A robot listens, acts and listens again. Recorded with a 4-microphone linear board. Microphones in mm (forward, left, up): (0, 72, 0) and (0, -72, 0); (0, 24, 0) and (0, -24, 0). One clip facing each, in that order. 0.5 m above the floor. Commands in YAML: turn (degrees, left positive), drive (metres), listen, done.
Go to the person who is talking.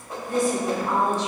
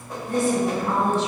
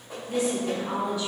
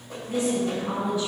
turn: -30
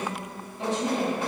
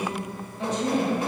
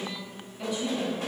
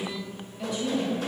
drive: 1.0
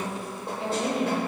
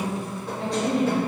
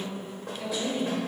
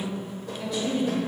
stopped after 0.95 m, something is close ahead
done: "I am next to the woman speaking."